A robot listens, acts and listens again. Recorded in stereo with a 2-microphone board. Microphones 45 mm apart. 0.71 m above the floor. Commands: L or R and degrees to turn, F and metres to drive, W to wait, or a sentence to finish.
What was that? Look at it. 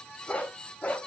L25
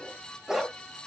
R15
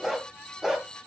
R15
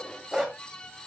R15
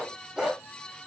R15
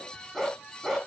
Found it: a dog barking, straight ahead.